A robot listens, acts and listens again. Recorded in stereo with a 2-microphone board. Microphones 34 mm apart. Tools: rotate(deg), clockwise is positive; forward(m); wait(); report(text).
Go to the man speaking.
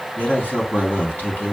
rotate(-55)
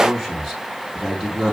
forward(1.0)
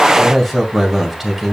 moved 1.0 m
forward(1.0)
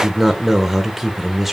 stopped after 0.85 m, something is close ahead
rotate(10)
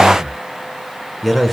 report("I am next to the man speaking.")